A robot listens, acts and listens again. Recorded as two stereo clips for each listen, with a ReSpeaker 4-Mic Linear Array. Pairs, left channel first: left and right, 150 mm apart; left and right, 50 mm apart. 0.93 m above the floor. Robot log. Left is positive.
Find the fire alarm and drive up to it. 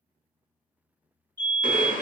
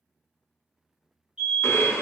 note: The fire alarm: about 25° right or 155° right.
cmd yaw -25
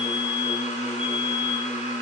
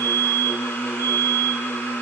note: So it is at 10° right.
cmd yaw -10
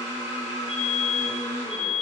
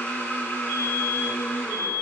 cmd fwd 1.0
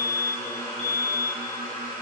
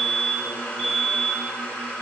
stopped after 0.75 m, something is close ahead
end: Arrived at the fire alarm, straight ahead.